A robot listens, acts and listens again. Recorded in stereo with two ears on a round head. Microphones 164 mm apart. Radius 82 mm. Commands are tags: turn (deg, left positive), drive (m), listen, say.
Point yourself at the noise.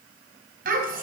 <turn deg="-50"/>
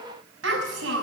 <turn deg="-80"/>
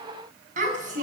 <turn deg="-45"/>
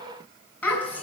<turn deg="10"/>
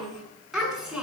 <say>Found it: a child speaking, straight ahead.</say>